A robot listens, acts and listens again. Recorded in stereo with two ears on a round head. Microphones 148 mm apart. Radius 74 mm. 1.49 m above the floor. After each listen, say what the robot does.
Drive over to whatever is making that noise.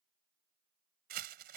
Turn 60° right.
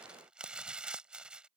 Drive 1.0 m forward.
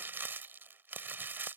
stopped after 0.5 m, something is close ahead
Turn 15° right.
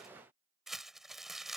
Blocked. The crumpling is further on, straight ahead.